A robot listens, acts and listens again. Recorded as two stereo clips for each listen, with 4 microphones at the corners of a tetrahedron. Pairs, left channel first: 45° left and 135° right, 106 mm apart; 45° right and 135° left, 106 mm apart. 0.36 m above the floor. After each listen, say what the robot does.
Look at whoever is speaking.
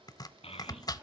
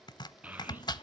Turn 60° left.
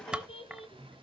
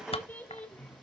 Turn 35° left.
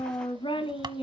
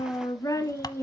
Turn 20° left.
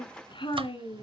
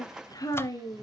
Turn 15° left.
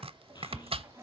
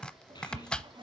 Keep listening.
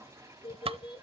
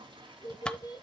Turn 10° left.
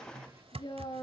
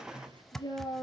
Found it: a child speaking, straight ahead.